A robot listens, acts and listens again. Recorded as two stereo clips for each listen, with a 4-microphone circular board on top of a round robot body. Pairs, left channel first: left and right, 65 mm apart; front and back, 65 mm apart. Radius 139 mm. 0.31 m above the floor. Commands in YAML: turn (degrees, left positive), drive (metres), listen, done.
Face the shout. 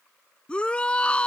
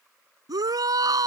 turn: 160
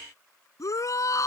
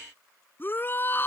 turn: 55
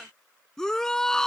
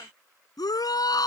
turn: 10
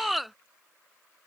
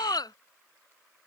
done: "Facing the shout."